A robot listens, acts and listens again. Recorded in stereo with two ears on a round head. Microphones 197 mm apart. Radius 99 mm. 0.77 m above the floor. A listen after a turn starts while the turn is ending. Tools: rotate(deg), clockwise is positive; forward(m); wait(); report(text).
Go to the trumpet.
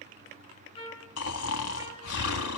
rotate(-25)
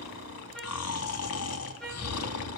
forward(1.0)
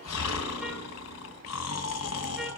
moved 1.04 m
wait()
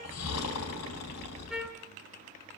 wait()
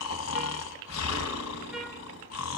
report("I heard a trumpet from this way, but can't make it out now. I did not reach it.")